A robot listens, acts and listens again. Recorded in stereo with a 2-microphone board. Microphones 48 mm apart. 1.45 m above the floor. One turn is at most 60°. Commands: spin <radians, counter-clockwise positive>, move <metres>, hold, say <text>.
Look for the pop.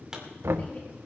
spin -0.52
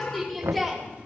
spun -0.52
hold
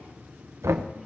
say I heard a pop, but can't make it out now. It was about 15° left or 135° right.